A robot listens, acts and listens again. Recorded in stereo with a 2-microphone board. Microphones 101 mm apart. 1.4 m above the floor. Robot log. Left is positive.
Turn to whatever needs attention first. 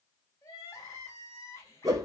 note: The crying: about 30° left or 150° left.
cmd yaw +30
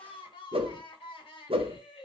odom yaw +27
note: So it is at 120° left.
cmd yaw +120
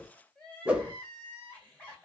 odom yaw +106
note: The crying is now 15° left.
cmd yaw +15
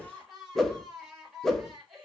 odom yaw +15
end: Found it: crying, straight ahead, 1 to 2 m away.